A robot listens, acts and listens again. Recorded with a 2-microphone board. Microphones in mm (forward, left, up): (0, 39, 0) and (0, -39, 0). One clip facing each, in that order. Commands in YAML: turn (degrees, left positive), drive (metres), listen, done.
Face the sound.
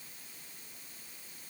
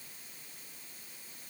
listen: true
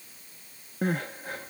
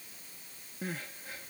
turn: 60
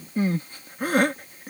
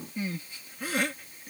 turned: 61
turn: 50
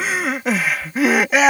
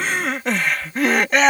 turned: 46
done: "Facing the crying."